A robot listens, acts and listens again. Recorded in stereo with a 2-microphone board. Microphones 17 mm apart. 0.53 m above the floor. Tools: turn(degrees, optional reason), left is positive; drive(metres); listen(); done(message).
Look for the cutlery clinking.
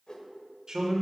listen()
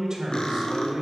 turn(degrees=60, reason="The cutlery clinking: about 60° left or 120° left.")
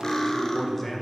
turn(degrees=45, reason="So it is at 45° left.")
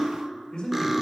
turn(degrees=-25, reason="The cutlery clinking is now 25° right.")
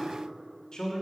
listen()
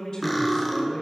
done("Found it: cutlery clinking, straight ahead.")